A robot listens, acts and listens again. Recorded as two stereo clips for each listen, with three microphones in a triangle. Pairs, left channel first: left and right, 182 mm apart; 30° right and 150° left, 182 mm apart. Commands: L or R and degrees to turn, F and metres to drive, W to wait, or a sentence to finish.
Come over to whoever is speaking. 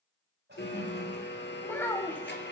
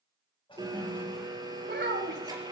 L170
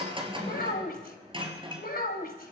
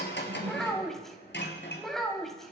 L60
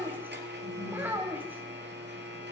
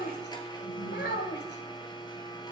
R10
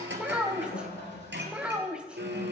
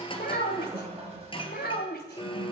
F1.0
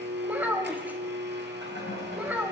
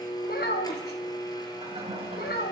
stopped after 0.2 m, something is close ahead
R10
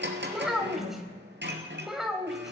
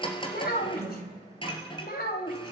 Blocked. The child speaking is further on, straight ahead.